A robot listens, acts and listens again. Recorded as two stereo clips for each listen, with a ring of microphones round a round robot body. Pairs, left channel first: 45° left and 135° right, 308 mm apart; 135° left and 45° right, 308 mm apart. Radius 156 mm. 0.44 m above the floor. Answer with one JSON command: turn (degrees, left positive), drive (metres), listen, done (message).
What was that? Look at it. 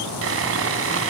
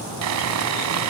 {"turn": -85}
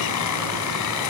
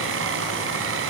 {"done": "Found it: sawing, straight ahead, 1 to 2 m away."}